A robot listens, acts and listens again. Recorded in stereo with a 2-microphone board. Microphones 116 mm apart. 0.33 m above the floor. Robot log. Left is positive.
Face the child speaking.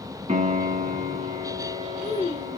note: The child speaking: about 70° left or 110° left.
cmd yaw +70
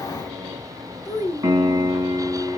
note: So it is at 35° left.
cmd yaw +35
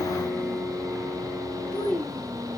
note: The child speaking is now 10° left.
cmd yaw +10
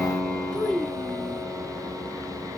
end: Found it: a child speaking, straight ahead, 2 to 4 m away.